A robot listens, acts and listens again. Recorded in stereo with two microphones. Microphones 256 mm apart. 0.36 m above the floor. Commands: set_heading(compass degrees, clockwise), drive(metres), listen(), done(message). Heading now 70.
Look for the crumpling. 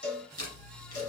set_heading(340)
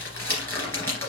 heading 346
set_heading(336)
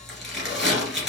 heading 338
done("Facing the crumpling, 2 to 4 m away.")